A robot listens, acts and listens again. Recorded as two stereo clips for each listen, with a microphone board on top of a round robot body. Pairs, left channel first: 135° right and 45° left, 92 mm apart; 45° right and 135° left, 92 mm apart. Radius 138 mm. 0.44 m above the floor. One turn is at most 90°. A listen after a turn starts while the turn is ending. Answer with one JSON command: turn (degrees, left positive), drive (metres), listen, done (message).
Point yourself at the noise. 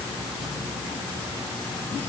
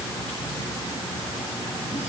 {"listen": true}
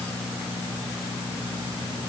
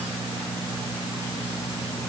{"listen": true}
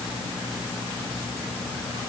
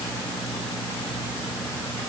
{"done": "I can't make out anything to turn to."}